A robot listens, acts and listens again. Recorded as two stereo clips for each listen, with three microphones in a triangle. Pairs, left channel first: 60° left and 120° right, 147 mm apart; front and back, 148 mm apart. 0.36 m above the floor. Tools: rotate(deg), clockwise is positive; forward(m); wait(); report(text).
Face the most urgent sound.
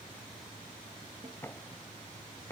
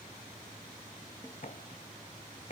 wait()
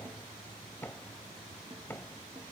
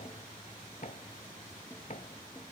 wait()
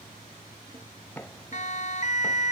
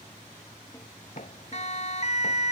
rotate(-35)
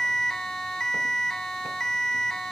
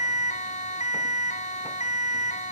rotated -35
rotate(25)
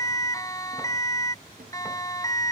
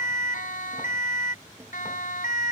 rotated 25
report("Found it: a siren, straight ahead.")